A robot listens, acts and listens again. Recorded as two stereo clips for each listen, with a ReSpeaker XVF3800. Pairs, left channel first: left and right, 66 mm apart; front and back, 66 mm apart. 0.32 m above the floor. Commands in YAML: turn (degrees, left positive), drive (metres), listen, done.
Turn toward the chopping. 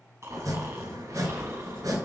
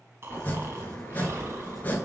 turn: -65
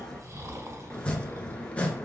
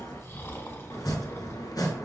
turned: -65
turn: 20
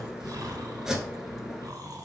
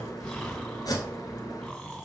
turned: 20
turn: -10
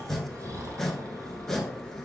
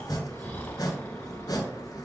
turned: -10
done: "Found it: chopping, straight ahead."